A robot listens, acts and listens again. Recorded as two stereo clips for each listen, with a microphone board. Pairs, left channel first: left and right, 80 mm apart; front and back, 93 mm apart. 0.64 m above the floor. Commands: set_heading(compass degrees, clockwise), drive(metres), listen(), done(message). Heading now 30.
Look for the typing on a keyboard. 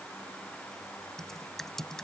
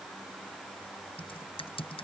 done("Found it: typing on a keyboard, straight ahead.")